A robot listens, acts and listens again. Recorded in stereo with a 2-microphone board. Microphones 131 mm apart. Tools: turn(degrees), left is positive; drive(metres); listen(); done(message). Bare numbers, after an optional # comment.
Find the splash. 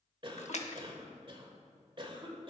# The splash: about 60° left or 120° left.
turn(60)
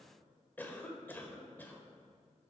listen()
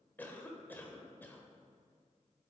done("I heard a splash, but can't make it out now. It was about straight ahead or 60° left.")